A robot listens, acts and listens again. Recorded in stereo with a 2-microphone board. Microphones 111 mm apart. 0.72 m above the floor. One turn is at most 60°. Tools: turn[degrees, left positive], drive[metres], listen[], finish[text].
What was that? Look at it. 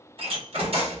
Thought: The door slam: about 60° right or 120° right.
Action: turn[-60]
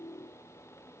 Action: listen[]
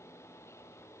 Action: finish[I heard a door slam, but can't make it out now. It was about straight ahead or 60° right.]